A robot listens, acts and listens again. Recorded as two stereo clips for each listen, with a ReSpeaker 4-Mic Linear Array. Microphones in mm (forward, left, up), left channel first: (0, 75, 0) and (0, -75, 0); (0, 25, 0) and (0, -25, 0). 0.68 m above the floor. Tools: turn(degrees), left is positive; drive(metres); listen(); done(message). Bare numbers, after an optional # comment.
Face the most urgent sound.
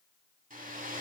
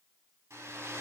listen()
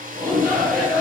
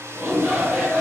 turn(-30)
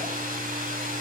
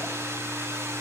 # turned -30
listen()
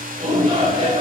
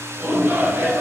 # So it is at 145° right.
turn(-145)
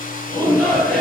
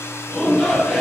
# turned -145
# The shout is now 10° left.
turn(10)
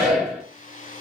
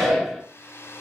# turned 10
done("Found it: a shout, straight ahead.")